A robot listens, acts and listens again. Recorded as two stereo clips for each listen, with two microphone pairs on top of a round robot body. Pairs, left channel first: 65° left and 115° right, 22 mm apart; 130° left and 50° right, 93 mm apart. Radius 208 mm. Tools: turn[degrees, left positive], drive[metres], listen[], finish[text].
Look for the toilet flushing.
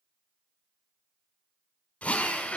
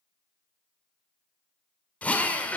Action: listen[]
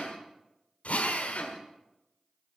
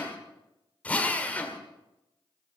Action: listen[]
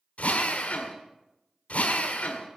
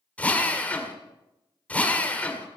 Action: finish[I can't make out a toilet flushing, only a drill.]